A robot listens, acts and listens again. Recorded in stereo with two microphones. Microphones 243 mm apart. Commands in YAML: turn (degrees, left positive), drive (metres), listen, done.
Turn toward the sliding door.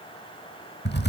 listen: true
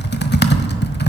listen: true
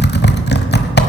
done: "I can't make out a sliding door, only typing on a keyboard."